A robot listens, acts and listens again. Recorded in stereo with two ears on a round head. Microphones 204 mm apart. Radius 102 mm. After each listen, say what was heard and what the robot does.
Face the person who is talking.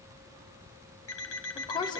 The woman speaking: about 20° left or 160° left. Turn 20° left.
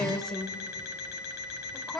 Facing the woman speaking.